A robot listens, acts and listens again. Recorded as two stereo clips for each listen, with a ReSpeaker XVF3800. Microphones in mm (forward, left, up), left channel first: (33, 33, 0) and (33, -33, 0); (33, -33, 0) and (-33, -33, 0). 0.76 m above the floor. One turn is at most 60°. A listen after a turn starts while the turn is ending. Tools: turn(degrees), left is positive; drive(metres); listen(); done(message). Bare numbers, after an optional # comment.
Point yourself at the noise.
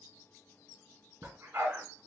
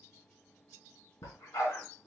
# The dog barking: 45° right.
turn(-45)
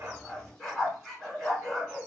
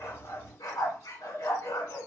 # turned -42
done("Found it: a dog barking, straight ahead.")